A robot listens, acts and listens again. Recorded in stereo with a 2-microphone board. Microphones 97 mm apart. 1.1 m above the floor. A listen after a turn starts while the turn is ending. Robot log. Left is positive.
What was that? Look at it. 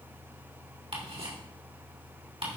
note: The ticking: about 75° right or 105° right.
cmd yaw -75
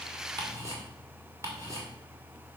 note: So it is at 30° right.
cmd yaw -30
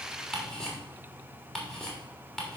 note: The ticking is now 10° left.
cmd yaw +10
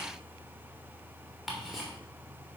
end: Facing the ticking.